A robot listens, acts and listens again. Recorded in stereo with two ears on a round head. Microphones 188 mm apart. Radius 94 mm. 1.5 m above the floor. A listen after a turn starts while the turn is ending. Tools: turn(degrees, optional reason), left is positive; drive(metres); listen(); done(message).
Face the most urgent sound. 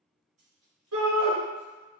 turn(degrees=-90)
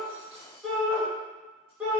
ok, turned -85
done("Facing the shout, 1 to 2 m away.")